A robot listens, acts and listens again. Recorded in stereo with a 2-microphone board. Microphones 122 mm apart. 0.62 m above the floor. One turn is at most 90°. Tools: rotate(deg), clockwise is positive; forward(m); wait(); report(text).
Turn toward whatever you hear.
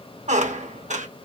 rotate(90)
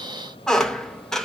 report("Found it: a squeak, straight ahead.")